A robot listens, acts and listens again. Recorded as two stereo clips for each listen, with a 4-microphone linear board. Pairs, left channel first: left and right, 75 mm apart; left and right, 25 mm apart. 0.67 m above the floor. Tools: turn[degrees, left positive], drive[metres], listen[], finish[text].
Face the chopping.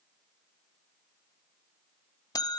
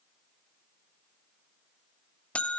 Action: listen[]
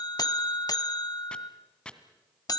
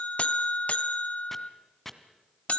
Action: turn[30]
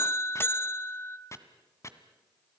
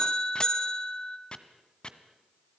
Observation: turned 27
Thought: So it is at 140° left.
Action: turn[140]
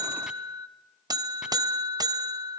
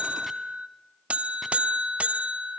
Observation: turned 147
Thought: Nothing new. It was at 10° right.
Action: turn[-10]
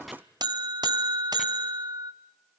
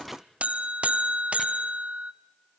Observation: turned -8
Action: listen[]
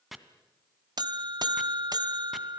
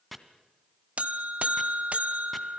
Action: finish[Facing the chopping.]